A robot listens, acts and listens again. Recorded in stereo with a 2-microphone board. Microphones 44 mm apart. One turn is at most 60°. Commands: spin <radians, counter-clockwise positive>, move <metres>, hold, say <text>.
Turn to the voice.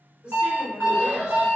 spin -0.44
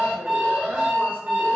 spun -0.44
hold
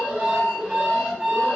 hold
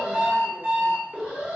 say I heard a woman speaking, but can't make it out now. It was about straight ahead or 130° right.